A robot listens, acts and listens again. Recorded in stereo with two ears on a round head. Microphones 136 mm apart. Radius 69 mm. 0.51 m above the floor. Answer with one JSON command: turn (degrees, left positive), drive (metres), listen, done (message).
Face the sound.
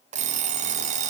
{"turn": -50}
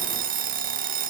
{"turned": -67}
{"turn": -60}
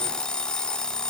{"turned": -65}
{"done": "Found it: an alarm clock, straight ahead."}